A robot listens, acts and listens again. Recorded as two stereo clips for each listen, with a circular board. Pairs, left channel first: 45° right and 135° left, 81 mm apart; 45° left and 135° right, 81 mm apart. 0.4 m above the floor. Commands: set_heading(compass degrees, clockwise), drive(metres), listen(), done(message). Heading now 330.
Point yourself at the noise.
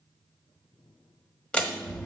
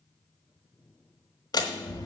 set_heading(300)
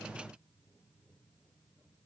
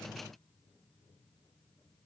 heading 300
done("Facing where the door slam came from. I can't hear it now.")